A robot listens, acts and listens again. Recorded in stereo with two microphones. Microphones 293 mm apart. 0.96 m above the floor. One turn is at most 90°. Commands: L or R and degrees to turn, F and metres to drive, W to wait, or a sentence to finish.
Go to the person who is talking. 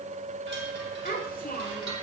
L30
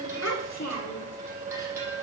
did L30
L90
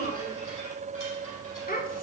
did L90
L30
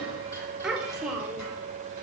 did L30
F1.0
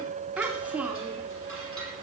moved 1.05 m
F1.0
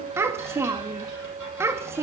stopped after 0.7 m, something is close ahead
R10
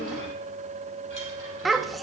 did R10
Arrived at the child speaking, straight ahead.